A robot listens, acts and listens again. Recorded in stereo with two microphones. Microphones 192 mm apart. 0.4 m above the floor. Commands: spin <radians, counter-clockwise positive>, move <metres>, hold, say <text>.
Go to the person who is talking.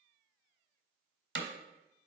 hold
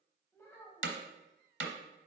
spin 0.52
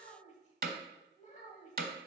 spin 2.36
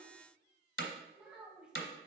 move 1.0
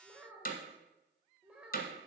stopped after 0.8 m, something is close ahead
spin -0.17
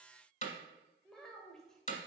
say I am next to the child speaking.